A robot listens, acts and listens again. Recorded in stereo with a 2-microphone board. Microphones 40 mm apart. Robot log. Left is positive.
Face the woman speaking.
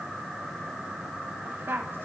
note: The woman speaking: about 70° right or 110° right.
cmd yaw -70
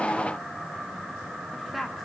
end: Facing the woman speaking.